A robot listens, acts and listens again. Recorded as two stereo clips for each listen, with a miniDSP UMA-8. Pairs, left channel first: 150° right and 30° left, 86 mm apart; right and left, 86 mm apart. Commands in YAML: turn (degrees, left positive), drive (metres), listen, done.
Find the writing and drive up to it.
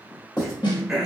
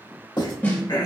turn: -110
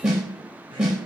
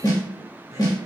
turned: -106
listen: true
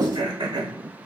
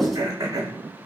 drive: 1.0
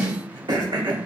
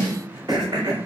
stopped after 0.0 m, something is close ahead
done: "Something is in my way. I am facing the writing but have not reached it."